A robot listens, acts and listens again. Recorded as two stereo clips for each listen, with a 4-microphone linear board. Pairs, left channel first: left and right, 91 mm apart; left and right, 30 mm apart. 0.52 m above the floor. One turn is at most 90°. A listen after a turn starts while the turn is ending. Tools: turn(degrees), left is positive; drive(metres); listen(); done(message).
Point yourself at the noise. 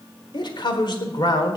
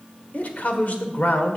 turn(degrees=60)
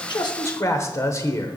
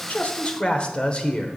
turn(degrees=40)
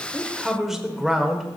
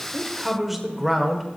done("Found it: a man speaking, straight ahead.")